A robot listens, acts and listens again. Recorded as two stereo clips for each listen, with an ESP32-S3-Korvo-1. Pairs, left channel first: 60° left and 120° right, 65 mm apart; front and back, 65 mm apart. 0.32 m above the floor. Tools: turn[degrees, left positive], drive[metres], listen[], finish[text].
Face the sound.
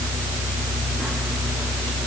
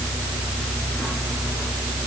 Action: listen[]
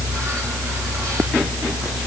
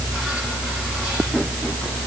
Action: listen[]
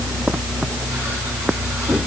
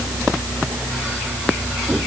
Action: finish[I can't make out anything to turn to.]